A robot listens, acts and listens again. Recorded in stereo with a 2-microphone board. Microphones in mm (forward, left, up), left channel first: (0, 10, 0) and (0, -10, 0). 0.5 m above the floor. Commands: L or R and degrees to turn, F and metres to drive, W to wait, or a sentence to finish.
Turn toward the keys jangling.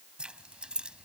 R60
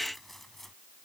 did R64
L15
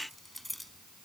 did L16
Facing the keys jangling.